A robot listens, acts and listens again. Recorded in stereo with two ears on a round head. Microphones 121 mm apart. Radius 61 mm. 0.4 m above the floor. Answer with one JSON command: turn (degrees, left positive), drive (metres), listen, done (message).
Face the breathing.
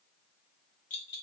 {"listen": true}
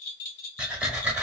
{"turn": -30}
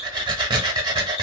{"turn": -140}
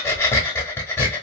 {"turn": 20}
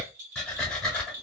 {"done": "Facing the breathing."}